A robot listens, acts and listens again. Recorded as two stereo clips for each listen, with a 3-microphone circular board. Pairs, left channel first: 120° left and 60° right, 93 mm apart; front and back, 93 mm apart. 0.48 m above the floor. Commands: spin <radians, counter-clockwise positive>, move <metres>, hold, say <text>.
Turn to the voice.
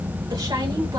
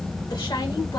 spin -0.61
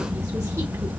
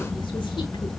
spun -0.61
hold
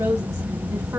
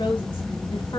spin -0.17
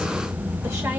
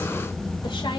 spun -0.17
hold
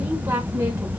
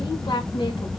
say Facing the woman speaking.